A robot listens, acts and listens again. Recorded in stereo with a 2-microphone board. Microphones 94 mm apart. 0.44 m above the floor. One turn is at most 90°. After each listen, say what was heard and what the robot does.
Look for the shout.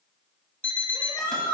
The shout: about 60° left or 120° left. Turn 60° left.
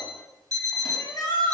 So it is at 50° left. Turn 50° left.
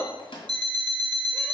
The shout is now 25° left. Turn 25° left.
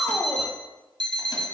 Facing the shout, 1 to 2 m away.